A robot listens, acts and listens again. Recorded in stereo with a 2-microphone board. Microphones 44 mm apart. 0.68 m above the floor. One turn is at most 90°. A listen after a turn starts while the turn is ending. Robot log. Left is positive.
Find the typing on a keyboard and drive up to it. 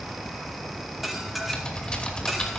note: The typing on a keyboard: about 20° left or 160° left.
cmd yaw +20
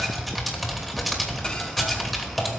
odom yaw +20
cmd fwd 1.0
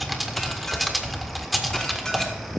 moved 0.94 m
cmd fwd 1.0
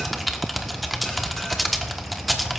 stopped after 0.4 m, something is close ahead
end: Arrived at the typing on a keyboard, straight ahead.